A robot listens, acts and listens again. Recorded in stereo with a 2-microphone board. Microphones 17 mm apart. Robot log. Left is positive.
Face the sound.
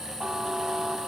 note: The buzzer: about 30° right or 150° right.
cmd yaw -30
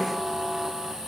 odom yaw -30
end: Facing the buzzer.